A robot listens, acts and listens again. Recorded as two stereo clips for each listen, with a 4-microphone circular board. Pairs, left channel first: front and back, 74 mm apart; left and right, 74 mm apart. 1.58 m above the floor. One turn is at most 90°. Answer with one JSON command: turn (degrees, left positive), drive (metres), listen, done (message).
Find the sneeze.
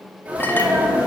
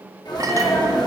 {"turn": 90}
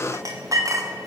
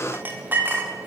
{"turn": 20}
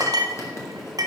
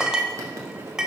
{"done": "I heard a sneeze from this way, but can't make it out now."}